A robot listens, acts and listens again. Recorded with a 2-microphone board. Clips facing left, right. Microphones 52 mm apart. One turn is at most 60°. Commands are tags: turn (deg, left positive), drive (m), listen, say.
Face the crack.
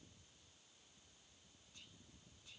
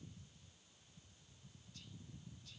<listen/>
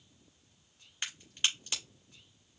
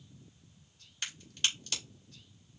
<turn deg="20"/>
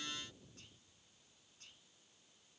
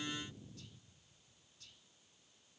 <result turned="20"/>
<listen/>
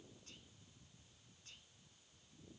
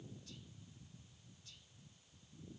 <say>I heard a crack, but can't make it out now. It was about straight ahead or 140° left.</say>